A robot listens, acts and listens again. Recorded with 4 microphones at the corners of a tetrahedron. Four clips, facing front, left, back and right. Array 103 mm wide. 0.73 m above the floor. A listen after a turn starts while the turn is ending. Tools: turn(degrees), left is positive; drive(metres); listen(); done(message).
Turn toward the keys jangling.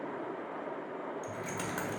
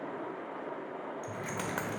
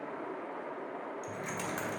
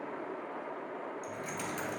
turn(degrees=80)
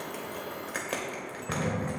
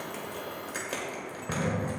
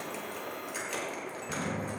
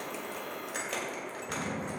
turn(degrees=15)
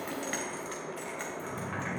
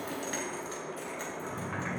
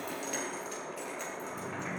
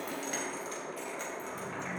turn(degrees=10)
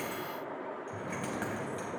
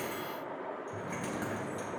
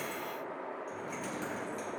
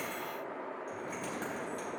listen()
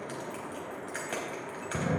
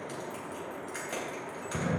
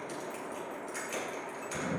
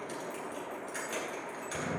done("Facing the keys jangling, 2 to 4 m away.")